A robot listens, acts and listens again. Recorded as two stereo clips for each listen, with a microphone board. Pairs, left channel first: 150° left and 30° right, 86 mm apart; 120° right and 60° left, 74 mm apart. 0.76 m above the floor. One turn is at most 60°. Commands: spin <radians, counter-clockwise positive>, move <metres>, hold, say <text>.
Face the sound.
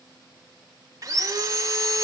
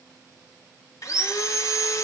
spin -1.05
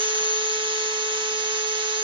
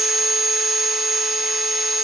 spin -0.44
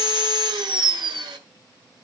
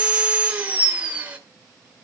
spin -0.17
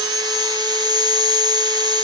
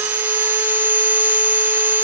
say Facing the sawing.